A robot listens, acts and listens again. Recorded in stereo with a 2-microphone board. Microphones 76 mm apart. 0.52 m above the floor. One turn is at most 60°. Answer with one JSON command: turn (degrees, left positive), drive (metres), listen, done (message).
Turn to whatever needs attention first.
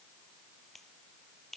{"listen": true}
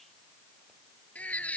{"turn": 20}
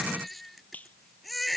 {"done": "Found it: a baby crying, straight ahead."}